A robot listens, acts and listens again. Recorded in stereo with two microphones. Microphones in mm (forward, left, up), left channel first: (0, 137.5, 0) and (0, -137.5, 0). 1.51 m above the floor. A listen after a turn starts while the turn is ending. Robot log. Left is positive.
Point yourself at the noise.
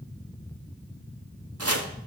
note: The chopping: about 60° right or 120° right.
cmd yaw -60
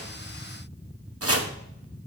note: So it is at 60° right.
cmd yaw -60
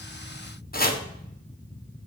note: The chopping is now 35° left.
cmd yaw +35
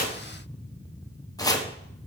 note: The chopping is now 15° left.
cmd yaw +15
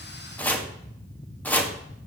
end: Found it: chopping, straight ahead, 1 to 2 m away.